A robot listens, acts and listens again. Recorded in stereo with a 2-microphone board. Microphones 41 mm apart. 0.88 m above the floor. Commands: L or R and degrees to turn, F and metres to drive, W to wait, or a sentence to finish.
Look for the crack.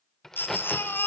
L30
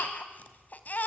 W
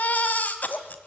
I heard a crack, but can't make it out now. It was about 20° right or 140° left.